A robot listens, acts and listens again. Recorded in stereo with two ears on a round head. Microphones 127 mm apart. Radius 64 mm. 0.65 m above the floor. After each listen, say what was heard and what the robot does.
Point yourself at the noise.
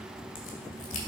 The crack: about 60° left or 120° left. Turn 60° left.
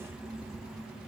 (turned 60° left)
Keep listening.
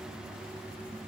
I heard a crack, but can't make it out now. It was about straight ahead or 60° left.